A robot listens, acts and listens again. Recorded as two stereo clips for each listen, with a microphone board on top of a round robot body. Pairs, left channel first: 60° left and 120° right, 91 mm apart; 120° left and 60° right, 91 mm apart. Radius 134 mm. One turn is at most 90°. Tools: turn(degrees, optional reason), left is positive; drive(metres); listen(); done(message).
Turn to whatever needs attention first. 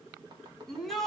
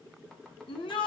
turn(degrees=90, reason="The shout: 145° left.")
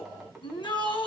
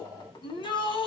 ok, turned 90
turn(degrees=90, reason="The shout is now 95° left.")
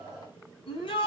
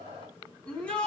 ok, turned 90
turn(degrees=40, reason="The shout is now 40° left.")
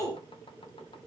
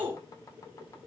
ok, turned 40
turn(degrees=10, reason="The shout is now 10° left.")
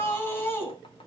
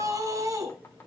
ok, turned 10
done("Facing the shout.")